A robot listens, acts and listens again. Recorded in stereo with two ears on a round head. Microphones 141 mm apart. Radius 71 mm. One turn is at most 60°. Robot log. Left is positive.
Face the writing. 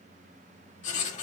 note: The writing: about 50° left or 130° left.
cmd yaw +50
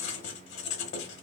note: So it is at 80° left.
cmd yaw +60
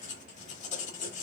note: The writing is now 45° left.
cmd yaw +45
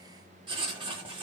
note: The writing is now 30° right.
cmd yaw -30
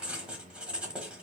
end: Found it: writing, straight ahead.